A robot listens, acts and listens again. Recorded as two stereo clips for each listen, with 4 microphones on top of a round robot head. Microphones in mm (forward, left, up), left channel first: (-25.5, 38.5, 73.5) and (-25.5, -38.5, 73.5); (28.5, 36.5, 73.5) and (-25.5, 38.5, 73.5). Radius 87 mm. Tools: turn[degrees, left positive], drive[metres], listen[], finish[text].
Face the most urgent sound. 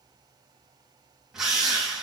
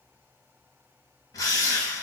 Action: listen[]
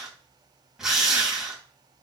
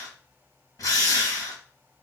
Action: listen[]
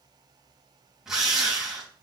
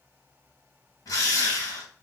Action: finish[I can't make out anything urgent, only a drill.]